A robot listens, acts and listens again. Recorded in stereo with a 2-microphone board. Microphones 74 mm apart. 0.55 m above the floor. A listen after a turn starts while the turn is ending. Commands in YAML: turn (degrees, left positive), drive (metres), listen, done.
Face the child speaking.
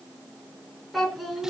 turn: 30
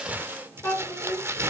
turn: 150
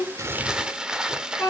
turn: 20
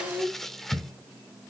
done: "Found it: a child speaking, straight ahead."